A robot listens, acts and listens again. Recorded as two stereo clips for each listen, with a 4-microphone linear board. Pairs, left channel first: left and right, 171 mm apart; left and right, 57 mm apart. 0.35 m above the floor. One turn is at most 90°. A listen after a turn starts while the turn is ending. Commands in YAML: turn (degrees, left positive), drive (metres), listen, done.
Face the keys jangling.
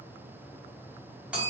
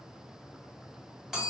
listen: true
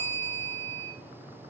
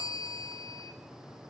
listen: true
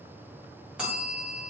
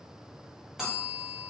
done: "I can't make out keys jangling, only a bell."